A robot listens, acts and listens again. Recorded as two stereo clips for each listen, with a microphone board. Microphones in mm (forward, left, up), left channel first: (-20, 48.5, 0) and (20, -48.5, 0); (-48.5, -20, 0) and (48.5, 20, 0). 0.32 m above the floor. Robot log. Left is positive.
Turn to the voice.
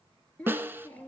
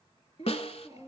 note: The child speaking: 175° right.
cmd yaw -175
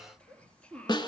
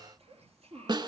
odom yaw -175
note: The child speaking is now 35° left.
cmd yaw +35
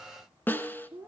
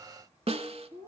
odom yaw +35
end: Found it: a child speaking, straight ahead.